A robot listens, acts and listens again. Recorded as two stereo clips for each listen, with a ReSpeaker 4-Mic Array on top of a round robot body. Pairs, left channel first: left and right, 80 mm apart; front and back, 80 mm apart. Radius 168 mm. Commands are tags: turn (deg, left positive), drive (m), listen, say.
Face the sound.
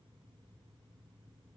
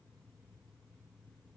<listen/>
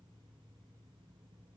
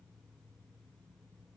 <listen/>
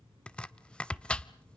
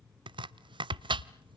<turn deg="165"/>
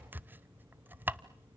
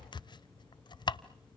<turn deg="-25"/>
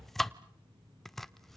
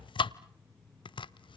<say>Found it: chopping, straight ahead, under 1 m away.</say>